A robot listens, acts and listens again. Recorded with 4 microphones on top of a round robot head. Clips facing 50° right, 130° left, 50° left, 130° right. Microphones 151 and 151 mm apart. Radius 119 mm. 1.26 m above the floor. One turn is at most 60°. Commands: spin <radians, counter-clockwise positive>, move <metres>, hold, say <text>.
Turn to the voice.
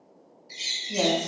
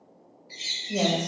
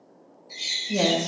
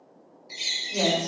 spin 0.96
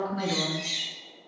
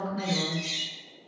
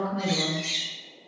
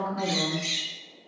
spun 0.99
say Facing the woman speaking.